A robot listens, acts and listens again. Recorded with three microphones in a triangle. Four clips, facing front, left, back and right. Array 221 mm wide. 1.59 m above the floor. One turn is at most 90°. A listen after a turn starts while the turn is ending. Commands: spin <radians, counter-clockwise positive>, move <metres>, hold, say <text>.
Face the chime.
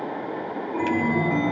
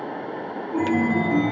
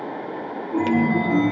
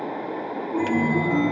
spin -1.57
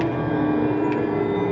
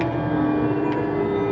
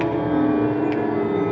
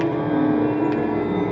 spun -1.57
spin -1.57
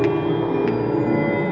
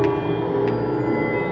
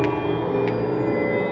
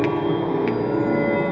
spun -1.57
spin -0.70
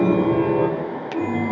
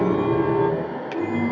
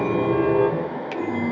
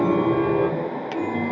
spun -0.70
say Facing the chime.